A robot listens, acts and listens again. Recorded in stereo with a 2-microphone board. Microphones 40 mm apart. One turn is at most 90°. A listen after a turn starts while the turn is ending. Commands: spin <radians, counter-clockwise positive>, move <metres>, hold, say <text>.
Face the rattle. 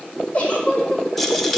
spin 0.52
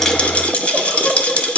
spin 1.57
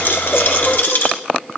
spin 1.13
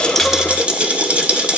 spin -0.61
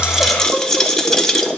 spin 0.17
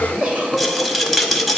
say Found it: a rattle, straight ahead.